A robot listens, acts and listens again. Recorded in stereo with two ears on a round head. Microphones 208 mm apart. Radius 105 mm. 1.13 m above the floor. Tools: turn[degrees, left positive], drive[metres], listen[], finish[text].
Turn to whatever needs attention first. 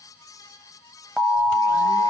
Action: turn[-30]
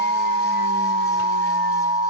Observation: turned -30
Thought: So it is at 145° right.
Action: turn[-145]
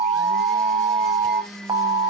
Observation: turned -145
Thought: The alarm is now 15° right.
Action: turn[-15]
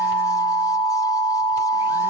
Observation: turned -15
Action: finish[Facing the alarm.]